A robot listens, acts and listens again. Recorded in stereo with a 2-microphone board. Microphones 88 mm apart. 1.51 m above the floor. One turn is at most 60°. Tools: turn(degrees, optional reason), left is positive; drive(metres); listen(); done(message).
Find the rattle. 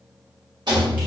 turn(degrees=-55, reason="The rattle: about 55° right or 125° right.")
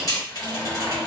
listen()
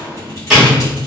done("Facing the rattle.")